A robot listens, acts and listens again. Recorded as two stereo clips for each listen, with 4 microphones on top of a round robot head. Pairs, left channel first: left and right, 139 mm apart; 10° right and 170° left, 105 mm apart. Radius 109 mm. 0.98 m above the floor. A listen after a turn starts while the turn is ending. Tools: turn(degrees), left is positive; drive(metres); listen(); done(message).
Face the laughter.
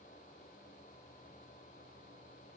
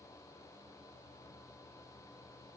listen()
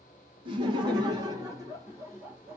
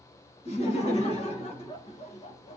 turn(degrees=-10)
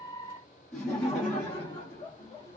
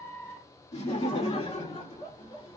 turn(degrees=15)
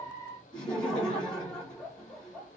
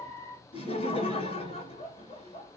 done("Found it: laughter, straight ahead, 1 to 2 m away.")